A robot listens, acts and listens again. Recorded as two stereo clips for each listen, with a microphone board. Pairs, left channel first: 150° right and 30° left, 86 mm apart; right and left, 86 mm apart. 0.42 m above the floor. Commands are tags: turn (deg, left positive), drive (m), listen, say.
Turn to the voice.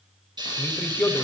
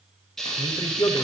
<turn deg="-85"/>
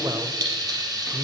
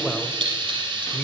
<say>Found it: a man speaking, straight ahead, 1 to 2 m away.</say>